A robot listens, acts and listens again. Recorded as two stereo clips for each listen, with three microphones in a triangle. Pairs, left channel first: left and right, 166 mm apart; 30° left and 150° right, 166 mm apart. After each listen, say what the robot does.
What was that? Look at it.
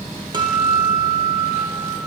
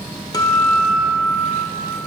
Turn 35° right.
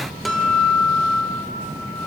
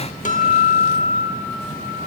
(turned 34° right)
Found it: a guitar, straight ahead, 1 to 2 m away.